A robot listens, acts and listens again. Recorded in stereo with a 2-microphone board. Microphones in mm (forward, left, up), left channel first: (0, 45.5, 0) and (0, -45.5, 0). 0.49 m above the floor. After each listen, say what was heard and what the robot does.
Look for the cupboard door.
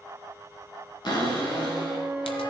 The cupboard door: about 50° left or 130° left. Turn 50° left.
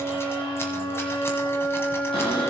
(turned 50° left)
Keep listening.
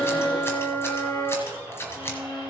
Keep listening.
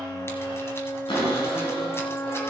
So it is at 80° left. Turn 80° left.
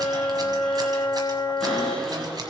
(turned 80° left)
The cupboard door is now 10° left. Turn 10° left.
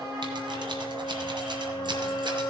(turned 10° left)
Keep listening.
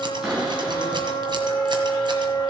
Found it: a cupboard door, straight ahead, 2 to 4 m away.